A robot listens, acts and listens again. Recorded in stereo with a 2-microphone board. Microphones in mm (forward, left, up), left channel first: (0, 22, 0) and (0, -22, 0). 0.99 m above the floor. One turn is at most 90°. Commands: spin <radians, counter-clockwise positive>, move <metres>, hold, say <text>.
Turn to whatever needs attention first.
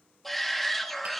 spin 0.52
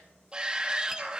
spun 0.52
spin -0.44
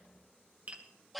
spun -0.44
say Found it: a shout, straight ahead, 1 to 2 m away.